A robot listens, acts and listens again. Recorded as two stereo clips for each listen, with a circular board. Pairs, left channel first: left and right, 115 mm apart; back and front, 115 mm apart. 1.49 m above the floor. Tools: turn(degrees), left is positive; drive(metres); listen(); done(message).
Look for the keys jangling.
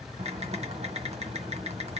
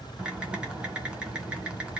listen()
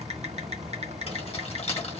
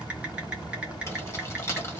turn(degrees=115)
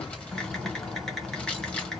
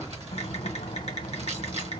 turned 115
listen()
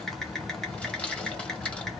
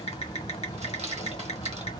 turn(degrees=10)
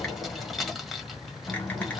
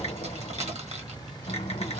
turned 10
done("Found it: keys jangling, straight ahead, 1 to 2 m away.")